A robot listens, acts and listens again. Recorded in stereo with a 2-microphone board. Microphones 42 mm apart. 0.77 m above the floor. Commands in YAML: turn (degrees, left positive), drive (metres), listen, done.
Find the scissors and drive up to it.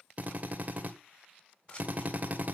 turn: 35
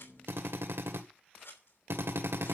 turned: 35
turn: 105
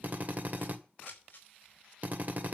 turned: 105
turn: 45
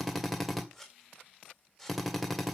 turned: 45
drive: 1.0
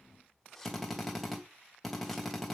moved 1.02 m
drive: 1.0
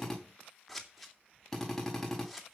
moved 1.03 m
drive: 1.0
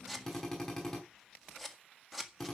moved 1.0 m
drive: 1.0
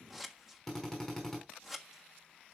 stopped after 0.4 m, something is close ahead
done: "I am next to the scissors."